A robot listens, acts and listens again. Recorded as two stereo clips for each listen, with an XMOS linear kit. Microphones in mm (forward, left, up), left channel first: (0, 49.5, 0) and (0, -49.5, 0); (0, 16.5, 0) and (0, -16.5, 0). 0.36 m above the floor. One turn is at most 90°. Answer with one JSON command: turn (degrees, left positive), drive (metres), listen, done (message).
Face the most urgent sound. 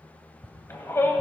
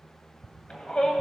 {"turn": 25}
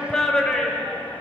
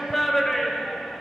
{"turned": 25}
{"turn": 10}
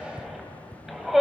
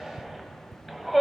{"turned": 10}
{"done": "Found it: a shout, straight ahead, 1 to 2 m away."}